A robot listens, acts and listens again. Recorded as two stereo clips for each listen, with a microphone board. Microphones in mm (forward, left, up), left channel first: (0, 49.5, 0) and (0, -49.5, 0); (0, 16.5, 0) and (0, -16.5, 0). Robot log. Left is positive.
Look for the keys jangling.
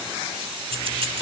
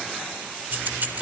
note: The keys jangling: about 65° right or 115° right.
cmd yaw -65
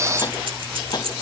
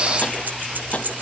note: So it is at 65° right.
cmd yaw -65
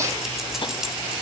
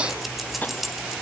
end: Facing the keys jangling, 2 to 4 m away.